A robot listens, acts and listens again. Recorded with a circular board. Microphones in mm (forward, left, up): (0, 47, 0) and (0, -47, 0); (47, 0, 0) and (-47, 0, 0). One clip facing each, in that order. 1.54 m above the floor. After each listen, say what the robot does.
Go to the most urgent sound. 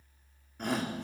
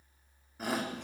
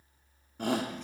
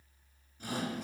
Drive 1.0 m forward.
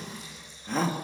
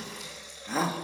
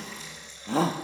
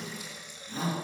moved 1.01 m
Drive 1.0 m forward.
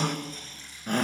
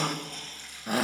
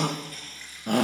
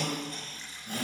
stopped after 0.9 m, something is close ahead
Arrived at the shout, straight ahead.